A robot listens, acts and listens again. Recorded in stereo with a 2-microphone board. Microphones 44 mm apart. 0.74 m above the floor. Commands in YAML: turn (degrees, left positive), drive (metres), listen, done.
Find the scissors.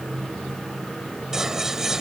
turn: -30
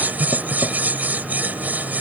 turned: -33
turn: -135
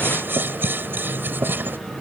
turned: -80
turn: -55
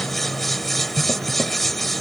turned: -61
done: "Found it: scissors, straight ahead."